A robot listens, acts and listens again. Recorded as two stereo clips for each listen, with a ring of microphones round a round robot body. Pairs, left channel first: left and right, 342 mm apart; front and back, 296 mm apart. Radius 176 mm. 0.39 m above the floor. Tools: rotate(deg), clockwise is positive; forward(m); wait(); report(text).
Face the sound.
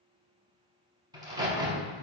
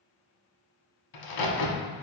rotate(10)
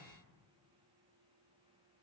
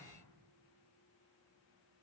report("Facing where the crack came from. I can't hear it now.")